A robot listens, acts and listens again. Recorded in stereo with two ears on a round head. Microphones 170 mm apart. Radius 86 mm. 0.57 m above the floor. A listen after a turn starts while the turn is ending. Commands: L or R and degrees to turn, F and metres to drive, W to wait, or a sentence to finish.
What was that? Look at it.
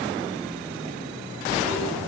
R20
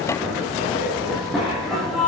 Found it: a zipper, straight ahead.